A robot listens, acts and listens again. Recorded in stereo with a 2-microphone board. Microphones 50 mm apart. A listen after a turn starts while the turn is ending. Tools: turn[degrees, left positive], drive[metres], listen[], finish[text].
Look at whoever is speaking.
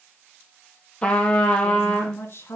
Thought: The woman speaking: about 55° left or 125° left.
Action: turn[55]
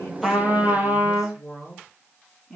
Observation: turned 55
Action: finish[Facing the woman speaking, 2 to 4 m away.]